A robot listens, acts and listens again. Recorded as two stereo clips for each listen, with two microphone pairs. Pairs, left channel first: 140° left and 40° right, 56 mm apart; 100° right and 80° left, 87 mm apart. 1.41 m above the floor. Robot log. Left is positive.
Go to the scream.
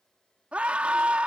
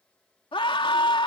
note: The scream: 105° right.
cmd yaw -105
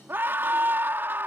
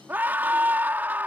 note: The scream is now 10° left.
cmd yaw +10
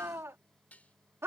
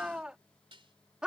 cmd fwd 1.0
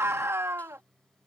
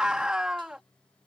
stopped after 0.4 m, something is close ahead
end: Blocked. The scream is further on, straight ahead.